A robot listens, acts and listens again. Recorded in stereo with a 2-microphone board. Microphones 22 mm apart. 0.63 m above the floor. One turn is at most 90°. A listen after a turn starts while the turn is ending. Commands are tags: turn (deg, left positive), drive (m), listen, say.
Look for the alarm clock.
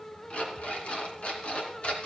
<turn deg="65"/>
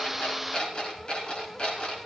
<turn deg="50"/>
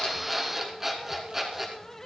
<turn deg="-10"/>
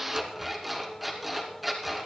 <say>Found it: an alarm clock, straight ahead.</say>